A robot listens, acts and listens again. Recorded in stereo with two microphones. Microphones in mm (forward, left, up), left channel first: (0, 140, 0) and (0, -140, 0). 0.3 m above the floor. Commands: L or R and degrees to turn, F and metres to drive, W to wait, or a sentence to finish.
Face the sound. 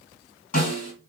L30
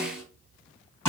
L10
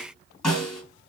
Facing the snare drum, 1 to 2 m away.